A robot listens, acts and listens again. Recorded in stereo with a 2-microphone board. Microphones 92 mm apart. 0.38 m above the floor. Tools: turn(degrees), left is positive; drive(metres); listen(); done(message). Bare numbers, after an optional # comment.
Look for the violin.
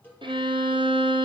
# The violin: about 70° right or 110° right.
turn(-70)
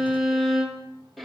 done("Facing the violin, 2 to 4 m away.")